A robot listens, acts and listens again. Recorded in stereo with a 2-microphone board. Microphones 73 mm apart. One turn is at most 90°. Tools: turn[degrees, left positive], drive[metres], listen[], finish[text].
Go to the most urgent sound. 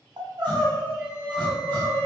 Thought: The crying: about 70° right or 110° right.
Action: turn[-70]
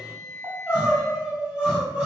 Thought: So it is at 15° right.
Action: turn[-15]
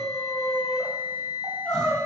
Action: drive[1.0]
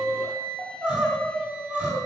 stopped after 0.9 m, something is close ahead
Thought: The crying is now 20° right.
Action: turn[-20]
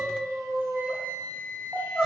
Action: finish[Arrived at the crying, straight ahead.]